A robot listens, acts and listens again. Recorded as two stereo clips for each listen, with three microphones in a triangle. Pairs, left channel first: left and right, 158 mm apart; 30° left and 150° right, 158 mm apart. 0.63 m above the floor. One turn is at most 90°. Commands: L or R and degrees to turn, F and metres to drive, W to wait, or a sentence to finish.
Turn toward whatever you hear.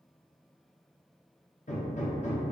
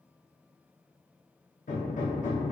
L55
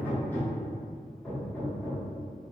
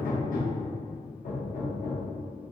L15
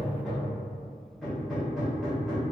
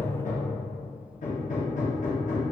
Facing the hammering, under 1 m away.